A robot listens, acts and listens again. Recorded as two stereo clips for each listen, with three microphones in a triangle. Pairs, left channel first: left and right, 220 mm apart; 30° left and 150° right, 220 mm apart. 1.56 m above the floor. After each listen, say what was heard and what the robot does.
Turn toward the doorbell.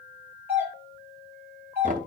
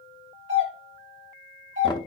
The doorbell: 170° right. Turn 170° right.
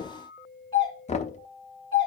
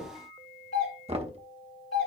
The doorbell is now 20° left. Turn 20° left.
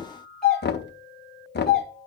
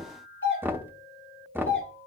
Facing the doorbell, over 4 m away.